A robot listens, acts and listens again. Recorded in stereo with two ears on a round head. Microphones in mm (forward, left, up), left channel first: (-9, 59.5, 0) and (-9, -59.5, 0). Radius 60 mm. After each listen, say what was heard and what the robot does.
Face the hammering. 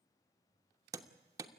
The hammering: about 25° right or 155° right. Turn 25° right.
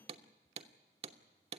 So it is at 130° right. Turn 130° right.
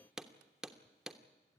Found it: hammering, straight ahead, 1 to 2 m away.